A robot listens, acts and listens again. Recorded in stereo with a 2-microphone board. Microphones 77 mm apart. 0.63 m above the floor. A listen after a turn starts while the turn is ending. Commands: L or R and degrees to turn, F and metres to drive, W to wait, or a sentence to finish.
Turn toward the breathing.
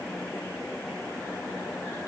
W
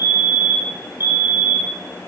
W
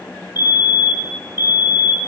I can't make out breathing to turn to.